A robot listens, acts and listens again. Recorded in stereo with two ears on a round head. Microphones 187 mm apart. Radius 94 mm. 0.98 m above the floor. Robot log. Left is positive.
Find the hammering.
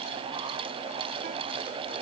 cmd idle
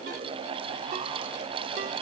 cmd idle
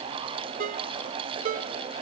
end: I can't make out hammering to turn to.